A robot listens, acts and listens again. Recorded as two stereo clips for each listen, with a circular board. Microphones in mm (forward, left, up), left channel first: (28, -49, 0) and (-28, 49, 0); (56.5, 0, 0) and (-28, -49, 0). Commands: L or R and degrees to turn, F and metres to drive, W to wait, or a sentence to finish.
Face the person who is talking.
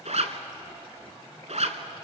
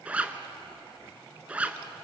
W
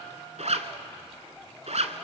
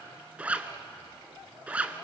W
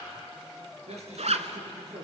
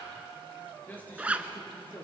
L100
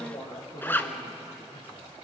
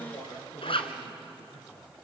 R20
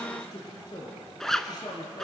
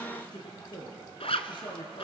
Facing the man speaking.